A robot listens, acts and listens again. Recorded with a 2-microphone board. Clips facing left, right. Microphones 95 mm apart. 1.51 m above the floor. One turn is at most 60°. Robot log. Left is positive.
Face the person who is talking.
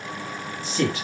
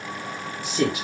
cmd yaw -30
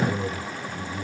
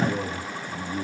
note: So it is at 135° right.
cmd yaw -60
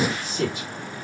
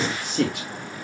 note: The man speaking is now 70° right.
cmd yaw -60
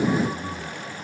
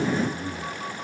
note: The man speaking is now 10° right.
cmd yaw -10
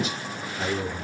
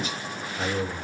end: Found it: a man speaking, straight ahead, over 4 m away.